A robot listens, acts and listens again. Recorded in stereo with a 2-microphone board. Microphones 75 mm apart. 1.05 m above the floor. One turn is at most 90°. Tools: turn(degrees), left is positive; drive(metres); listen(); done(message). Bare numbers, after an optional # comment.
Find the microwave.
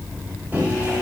# The microwave: about 25° right or 155° right.
turn(-25)
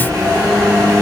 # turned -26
# So it is at 125° right.
turn(-90)
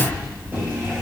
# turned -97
# Nothing new. It was at 30° right.
turn(-30)
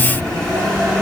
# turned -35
done("Found it: a microwave, straight ahead.")